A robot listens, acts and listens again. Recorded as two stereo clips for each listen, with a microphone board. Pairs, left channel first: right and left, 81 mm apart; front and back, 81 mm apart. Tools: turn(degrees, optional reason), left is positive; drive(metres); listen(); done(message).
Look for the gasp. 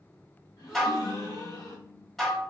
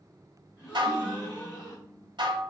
turn(degrees=-50, reason="The gasp: 50° right.")
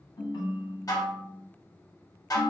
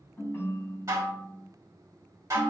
done("I heard a gasp from this way, but can't make it out now.")